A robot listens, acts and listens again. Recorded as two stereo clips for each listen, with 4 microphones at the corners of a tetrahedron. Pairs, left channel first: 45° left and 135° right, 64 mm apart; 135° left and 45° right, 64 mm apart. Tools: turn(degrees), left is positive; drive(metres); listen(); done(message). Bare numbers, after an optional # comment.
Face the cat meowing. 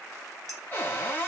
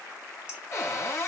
listen()
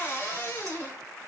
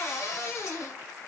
listen()
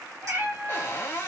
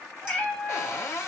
# The cat meowing: 150° right.
turn(-150)
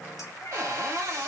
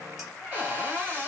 listen()
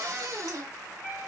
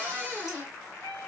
# The cat meowing is now 70° left.
turn(70)
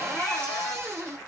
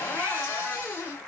listen()
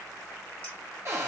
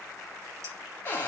listen()
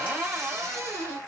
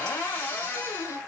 done("I heard a cat meowing from this way, but can't make it out now.")